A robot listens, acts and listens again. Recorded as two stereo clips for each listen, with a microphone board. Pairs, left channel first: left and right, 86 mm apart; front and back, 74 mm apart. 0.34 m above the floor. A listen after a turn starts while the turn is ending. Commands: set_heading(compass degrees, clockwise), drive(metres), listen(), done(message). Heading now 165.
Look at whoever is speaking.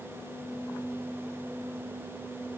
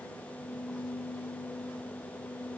listen()
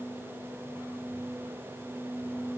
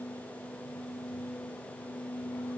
listen()
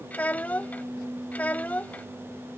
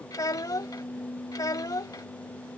set_heading(145)
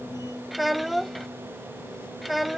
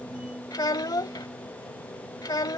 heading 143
done("Found it: a child speaking, straight ahead.")